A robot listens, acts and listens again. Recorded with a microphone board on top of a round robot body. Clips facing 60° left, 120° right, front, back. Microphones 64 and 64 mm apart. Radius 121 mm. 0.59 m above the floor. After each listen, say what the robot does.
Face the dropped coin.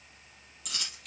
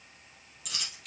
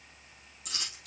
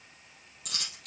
Turn 150° left.
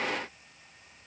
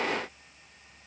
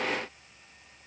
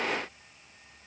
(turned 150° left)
I heard a dropped coin from this way, but can't make it out now.